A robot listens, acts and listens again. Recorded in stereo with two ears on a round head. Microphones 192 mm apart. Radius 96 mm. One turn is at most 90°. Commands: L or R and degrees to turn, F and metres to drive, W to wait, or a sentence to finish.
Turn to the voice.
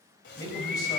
L20
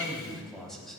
Found it: a man speaking, straight ahead, over 4 m away.